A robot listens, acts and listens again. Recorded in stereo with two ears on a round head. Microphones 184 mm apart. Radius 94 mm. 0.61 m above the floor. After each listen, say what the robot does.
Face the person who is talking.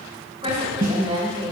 Turn 30° right.
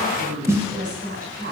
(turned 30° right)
Turn 120° right.
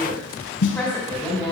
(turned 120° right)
Turn 10° left.
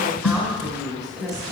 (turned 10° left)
Found it: a woman speaking, straight ahead.